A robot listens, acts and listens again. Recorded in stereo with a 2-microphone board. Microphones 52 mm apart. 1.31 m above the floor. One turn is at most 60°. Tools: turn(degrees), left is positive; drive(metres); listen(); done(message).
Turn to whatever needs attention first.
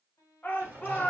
turn(degrees=35)
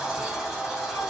listen()
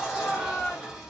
turn(degrees=60)
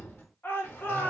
turn(degrees=40)
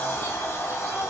listen()
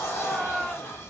done("Facing the shout, 1 to 2 m away.")